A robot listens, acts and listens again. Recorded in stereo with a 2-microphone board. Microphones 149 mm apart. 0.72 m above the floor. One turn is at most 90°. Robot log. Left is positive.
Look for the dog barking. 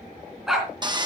cmd yaw +30
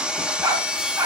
note: So it is at 20° right.
cmd yaw -20
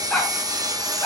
note: The dog barking is now 10° left.
cmd yaw +10
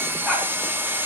cmd idle
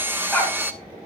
note: The dog barking is now 10° left.
cmd yaw +10
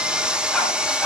end: Found it: a dog barking, straight ahead, 2 to 4 m away.